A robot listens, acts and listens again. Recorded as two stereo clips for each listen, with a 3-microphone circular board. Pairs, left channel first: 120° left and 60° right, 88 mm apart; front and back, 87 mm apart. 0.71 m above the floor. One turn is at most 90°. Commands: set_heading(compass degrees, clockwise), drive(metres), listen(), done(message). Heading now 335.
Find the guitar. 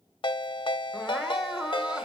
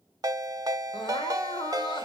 listen()
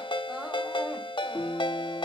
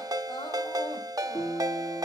set_heading(280)
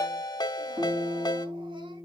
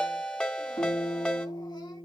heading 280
done("Found it: a guitar, straight ahead.")